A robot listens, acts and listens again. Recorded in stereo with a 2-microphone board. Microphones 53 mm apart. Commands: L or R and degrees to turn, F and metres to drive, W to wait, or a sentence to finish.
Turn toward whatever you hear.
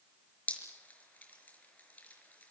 L30
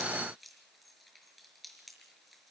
W
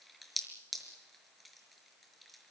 Found it: dripping, straight ahead.